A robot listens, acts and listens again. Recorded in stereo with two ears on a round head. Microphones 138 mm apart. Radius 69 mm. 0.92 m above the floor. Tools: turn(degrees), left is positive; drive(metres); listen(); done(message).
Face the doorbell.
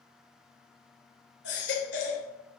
listen()
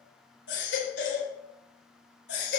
listen()
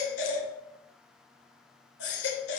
done("I can't make out a doorbell, only a baby crying.")